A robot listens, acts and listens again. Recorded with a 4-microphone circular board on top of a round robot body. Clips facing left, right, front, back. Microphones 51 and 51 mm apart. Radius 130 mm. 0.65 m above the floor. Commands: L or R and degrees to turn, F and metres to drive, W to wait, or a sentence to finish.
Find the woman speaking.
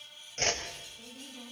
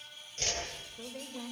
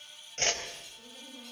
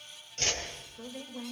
R130
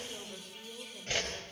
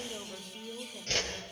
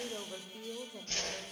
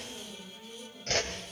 R10
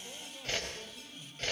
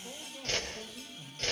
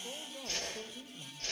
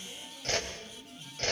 Found it: a woman speaking, straight ahead.